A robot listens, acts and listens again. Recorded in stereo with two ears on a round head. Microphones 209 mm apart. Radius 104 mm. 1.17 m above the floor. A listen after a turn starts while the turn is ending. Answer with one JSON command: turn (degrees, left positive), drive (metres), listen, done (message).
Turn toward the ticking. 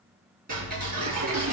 {"turn": -40}
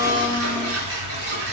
{"turn": -100}
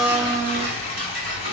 {"turn": -40}
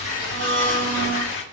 {"listen": true}
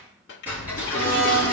{"done": "Facing the ticking, over 4 m away."}